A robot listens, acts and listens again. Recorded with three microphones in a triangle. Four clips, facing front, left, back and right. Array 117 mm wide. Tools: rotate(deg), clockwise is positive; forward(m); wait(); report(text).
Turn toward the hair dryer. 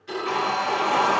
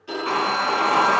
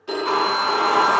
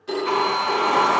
rotate(-150)
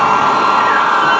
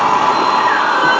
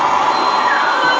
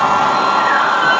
rotate(10)
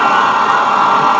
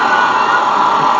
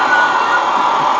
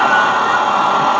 report("Facing the hair dryer, 1 to 2 m away.")